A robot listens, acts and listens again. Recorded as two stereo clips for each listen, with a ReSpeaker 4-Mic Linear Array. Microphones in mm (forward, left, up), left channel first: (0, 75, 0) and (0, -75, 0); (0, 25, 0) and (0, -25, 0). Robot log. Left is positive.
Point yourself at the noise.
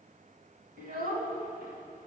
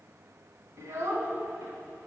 cmd yaw -90
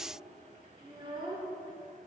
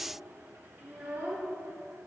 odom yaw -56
note: So it is at 35° right.
cmd yaw -35
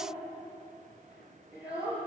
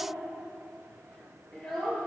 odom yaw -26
end: Found it: a child speaking, straight ahead, 2 to 4 m away.